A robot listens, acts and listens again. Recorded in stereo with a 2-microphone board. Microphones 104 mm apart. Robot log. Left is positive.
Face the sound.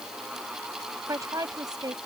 note: The woman speaking: about 40° right or 140° right.
cmd yaw -40
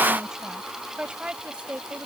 note: So it is at 15° right.
cmd yaw -15
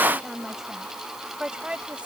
note: The woman speaking is now 10° right.
cmd yaw -10
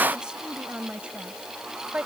note: The woman speaking is now 10° right.
cmd yaw -10
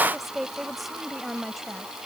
end: Facing the woman speaking.